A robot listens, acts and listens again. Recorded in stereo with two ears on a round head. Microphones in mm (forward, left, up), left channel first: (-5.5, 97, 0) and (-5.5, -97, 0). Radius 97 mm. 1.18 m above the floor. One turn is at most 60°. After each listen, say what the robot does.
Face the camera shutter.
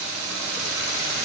Keep listening.
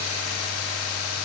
Keep listening.
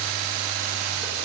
I can't make out a camera shutter.